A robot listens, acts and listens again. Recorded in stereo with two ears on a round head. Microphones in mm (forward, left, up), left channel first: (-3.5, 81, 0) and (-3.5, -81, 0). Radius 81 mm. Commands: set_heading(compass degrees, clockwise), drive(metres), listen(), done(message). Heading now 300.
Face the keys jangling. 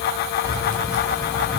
set_heading(355)
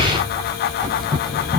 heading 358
done("Found it: keys jangling, straight ahead, over 4 m away.")